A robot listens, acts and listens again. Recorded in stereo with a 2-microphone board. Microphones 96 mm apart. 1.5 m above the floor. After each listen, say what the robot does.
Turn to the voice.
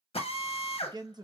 Turn 45° right.
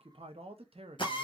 Turn 90° right.
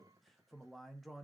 Facing the man speaking, under 1 m away.